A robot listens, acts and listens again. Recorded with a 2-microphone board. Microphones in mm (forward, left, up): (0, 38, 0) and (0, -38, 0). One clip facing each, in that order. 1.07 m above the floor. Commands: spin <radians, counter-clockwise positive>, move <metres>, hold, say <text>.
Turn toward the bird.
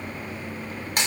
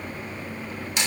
hold
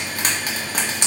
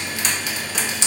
hold
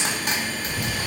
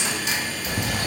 spin -0.96
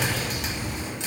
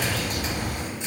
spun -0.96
spin -1.05
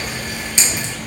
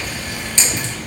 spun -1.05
say Facing the bird.